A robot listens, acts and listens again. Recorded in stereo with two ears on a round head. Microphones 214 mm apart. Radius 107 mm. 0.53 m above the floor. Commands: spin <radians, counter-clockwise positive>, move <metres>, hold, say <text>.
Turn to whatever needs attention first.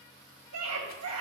spin -1.22
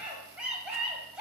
say Found it: a scream, straight ahead.